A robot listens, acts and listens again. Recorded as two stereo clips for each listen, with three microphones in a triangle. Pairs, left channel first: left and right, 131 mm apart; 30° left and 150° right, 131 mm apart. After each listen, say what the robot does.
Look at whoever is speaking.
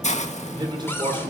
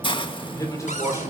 Turn 35° right.
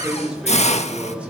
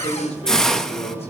Turn 10° right.
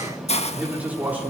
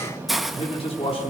Turn 15° right.
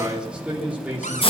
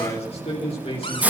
Turn 10° right.
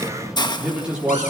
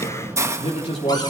Turn 10° right.
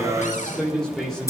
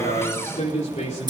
Found it: a man speaking, straight ahead, 2 to 4 m away.